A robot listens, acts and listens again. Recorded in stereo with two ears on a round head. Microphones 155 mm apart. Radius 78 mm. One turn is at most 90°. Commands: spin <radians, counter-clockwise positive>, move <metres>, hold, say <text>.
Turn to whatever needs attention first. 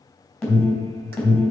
spin 0.52
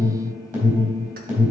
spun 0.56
spin -0.52
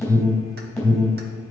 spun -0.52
say Found it: an alarm, straight ahead.